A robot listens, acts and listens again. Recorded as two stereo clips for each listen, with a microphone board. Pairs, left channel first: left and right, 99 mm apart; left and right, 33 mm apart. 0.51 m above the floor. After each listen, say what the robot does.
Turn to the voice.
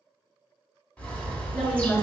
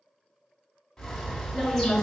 Turn 30° right.
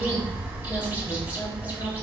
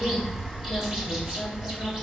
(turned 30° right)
Keep listening.
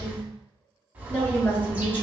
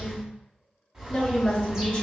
Turn 20° left.
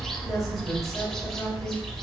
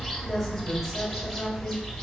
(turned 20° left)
Keep listening.
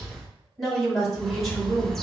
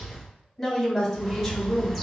Found it: a woman speaking, straight ahead.